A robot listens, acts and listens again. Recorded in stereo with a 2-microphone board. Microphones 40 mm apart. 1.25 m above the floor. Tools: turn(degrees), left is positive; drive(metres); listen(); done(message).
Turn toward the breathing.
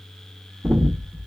turn(degrees=-55)
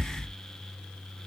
turn(degrees=-70)
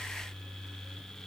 listen()
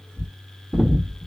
turn(degrees=-20)
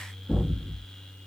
done("Found it: breathing, straight ahead.")